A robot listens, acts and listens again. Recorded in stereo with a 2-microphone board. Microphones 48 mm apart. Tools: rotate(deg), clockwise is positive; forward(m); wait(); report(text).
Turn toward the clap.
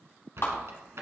rotate(-60)
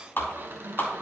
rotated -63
rotate(-50)
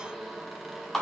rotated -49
report("Found it: a clap, straight ahead.")